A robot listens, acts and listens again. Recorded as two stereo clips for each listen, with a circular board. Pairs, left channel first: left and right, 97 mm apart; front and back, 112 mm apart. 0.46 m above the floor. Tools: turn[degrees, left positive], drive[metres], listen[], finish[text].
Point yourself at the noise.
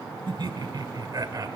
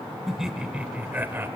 Thought: The laughter: 120° right.
Action: turn[-120]
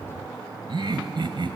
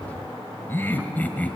Thought: The laughter is now 75° right.
Action: turn[-75]
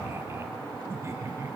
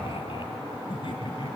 Thought: The laughter is now 35° right.
Action: turn[-35]
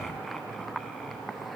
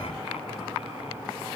Action: listen[]
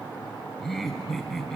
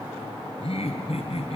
Action: finish[Facing the laughter, 2 to 4 m away.]